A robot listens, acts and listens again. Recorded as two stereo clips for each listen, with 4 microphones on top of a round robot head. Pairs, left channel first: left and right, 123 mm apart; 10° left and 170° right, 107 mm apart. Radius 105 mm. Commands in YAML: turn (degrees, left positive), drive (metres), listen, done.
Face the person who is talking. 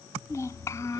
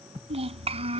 turn: 160
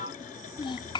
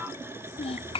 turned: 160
turn: 40
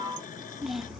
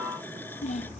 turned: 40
done: "Facing the child speaking."